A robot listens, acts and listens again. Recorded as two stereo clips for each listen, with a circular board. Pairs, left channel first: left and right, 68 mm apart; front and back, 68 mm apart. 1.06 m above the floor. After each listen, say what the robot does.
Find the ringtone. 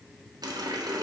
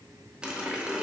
Keep listening.
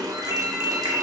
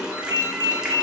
Turn 150° right.
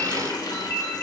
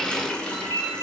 Turn 30° left.
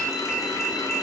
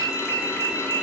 Turn 10° left.
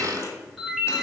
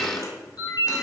Facing the ringtone, 1 to 2 m away.